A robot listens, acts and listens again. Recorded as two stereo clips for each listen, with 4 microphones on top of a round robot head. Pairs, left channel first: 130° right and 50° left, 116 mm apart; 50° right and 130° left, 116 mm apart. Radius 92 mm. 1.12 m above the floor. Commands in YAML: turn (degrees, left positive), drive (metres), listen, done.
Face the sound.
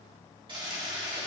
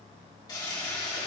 done: "Facing the toilet flushing, 2 to 4 m away."